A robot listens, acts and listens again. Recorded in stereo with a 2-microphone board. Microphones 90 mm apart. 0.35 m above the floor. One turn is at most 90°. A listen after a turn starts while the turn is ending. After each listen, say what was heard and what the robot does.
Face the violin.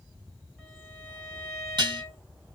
Turn 30° right.
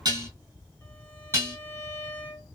So it is at 25° left. Turn 25° left.
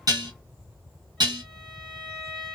Facing the violin, 2 to 4 m away.